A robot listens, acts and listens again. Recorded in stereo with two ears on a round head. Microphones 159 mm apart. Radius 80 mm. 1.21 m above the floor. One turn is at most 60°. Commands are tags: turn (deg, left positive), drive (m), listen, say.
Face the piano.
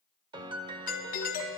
<turn deg="-25"/>
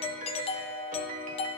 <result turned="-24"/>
<turn deg="-60"/>
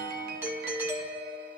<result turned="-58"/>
<turn deg="-60"/>
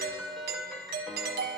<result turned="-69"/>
<say>Facing the piano.</say>